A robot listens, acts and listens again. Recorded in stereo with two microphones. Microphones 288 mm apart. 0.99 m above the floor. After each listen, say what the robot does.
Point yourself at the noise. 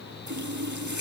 Turn 90° right.
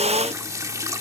Turn 10° right.
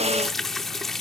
Facing the running tap.